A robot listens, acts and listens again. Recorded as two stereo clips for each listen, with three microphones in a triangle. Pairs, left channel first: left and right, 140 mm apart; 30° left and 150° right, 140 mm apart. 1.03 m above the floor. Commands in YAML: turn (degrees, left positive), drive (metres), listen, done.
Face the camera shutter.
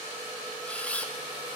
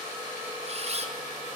turn: 170
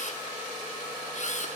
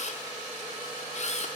turn: 60
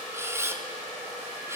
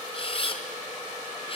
turn: -20
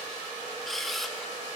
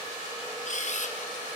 done: "Facing the camera shutter, 2 to 4 m away."